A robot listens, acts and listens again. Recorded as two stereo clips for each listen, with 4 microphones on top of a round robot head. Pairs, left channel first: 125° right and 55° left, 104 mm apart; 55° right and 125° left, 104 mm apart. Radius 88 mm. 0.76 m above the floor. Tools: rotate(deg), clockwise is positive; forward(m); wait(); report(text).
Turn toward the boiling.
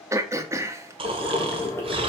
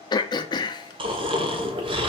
rotate(-165)
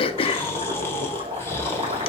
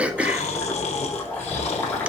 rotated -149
rotate(-20)
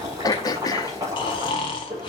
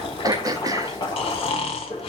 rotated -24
report("Facing the boiling.")